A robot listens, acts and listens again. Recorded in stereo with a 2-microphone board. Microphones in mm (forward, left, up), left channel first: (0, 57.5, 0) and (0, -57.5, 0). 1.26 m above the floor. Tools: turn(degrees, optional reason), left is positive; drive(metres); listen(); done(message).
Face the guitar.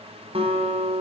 turn(degrees=-50, reason="The guitar: about 50° right or 130° right.")
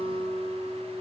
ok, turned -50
turn(degrees=-75, reason="So it is at 75° right.")
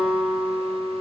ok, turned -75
turn(degrees=-10, reason="The guitar is now 10° right.")
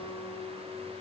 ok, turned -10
listen()
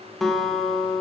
done("Found it: a guitar, straight ahead, 1 to 2 m away.")